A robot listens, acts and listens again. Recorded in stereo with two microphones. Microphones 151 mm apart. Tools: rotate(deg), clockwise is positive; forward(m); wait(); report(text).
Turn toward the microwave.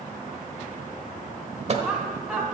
rotate(45)
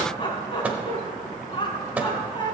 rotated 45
rotate(10)
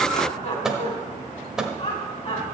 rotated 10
report("Facing the microwave.")